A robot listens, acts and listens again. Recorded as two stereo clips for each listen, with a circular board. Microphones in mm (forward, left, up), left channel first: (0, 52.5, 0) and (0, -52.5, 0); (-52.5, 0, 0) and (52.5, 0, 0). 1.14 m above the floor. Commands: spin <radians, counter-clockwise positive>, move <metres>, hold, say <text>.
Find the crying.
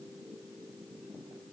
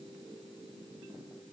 hold
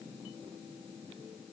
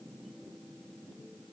hold
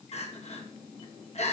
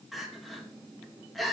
spin 1.57
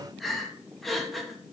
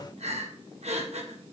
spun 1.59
say Found it: crying, straight ahead, 1 to 2 m away.